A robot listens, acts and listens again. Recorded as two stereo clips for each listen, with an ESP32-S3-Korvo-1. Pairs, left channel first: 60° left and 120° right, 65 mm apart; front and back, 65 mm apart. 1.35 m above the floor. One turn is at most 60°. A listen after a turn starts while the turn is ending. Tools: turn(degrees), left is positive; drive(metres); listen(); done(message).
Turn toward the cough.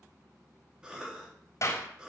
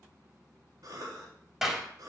turn(degrees=60)
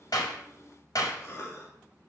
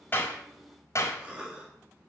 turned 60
turn(degrees=60)
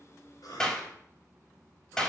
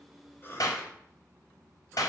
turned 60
turn(degrees=50)
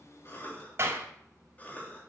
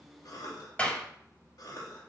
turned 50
done("Found it: a cough, straight ahead, 2 to 4 m away.")